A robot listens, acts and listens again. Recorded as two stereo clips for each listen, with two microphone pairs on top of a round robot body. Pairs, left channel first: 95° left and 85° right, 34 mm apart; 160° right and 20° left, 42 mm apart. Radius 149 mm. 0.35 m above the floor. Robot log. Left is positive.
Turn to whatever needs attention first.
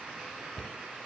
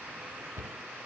cmd idle
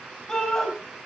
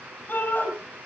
note: The shout: 155° left.
cmd yaw +155
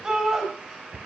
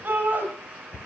note: The shout is now 20° right.
cmd yaw -20
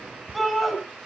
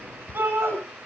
end: Found it: a shout, straight ahead.